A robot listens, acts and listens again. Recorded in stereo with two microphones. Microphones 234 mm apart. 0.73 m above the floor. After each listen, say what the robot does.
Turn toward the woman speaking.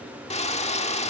Keep listening.
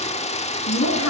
Turn 90° left.
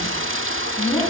Facing the woman speaking, over 4 m away.